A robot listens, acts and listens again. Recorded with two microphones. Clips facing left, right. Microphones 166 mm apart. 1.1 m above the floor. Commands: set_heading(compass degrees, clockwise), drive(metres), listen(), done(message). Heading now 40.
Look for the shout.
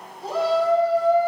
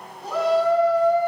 set_heading(10)
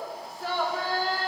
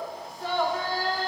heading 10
done("Facing the shout.")